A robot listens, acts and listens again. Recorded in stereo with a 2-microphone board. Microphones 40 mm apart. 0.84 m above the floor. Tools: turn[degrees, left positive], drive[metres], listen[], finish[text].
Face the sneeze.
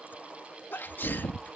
Thought: The sneeze: about 60° left or 120° left.
Action: turn[60]
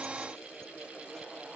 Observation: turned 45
Action: listen[]
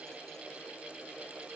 Action: finish[I heard a sneeze, but can't make it out now. It was about 15° left or 75° left.]